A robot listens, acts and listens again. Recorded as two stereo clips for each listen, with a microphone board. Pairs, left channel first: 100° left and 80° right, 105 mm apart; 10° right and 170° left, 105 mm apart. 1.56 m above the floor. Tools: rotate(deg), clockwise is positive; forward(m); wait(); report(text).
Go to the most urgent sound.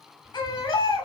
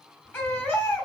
rotate(-65)
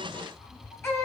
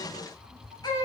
rotate(-35)
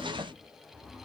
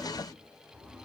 wait()
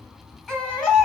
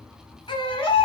rotate(-15)
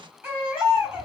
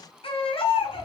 forward(1.0)
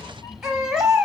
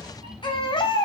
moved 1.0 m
forward(1.0)
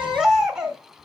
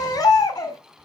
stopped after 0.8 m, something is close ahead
report("I am next to the baby crying.")